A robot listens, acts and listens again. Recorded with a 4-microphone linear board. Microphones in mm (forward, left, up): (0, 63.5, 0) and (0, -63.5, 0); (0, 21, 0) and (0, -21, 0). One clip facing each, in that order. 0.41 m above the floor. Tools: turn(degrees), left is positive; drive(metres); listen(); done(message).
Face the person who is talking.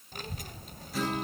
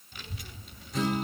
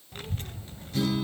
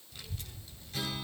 turn(degrees=45)
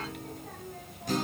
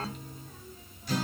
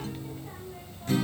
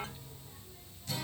turn(degrees=90)
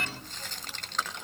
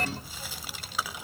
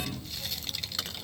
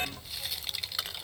turn(degrees=-10)
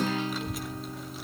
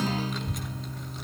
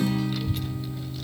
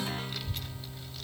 done("Facing the child speaking.")